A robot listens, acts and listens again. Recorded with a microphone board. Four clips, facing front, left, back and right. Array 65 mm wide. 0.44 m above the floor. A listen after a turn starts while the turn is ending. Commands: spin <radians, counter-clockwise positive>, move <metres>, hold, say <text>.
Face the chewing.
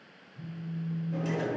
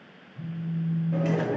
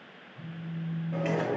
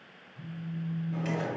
spin 2.01
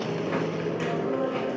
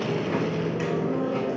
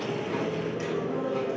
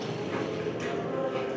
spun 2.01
spin 0.17
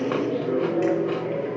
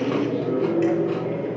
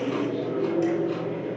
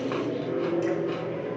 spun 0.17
say Facing the chewing.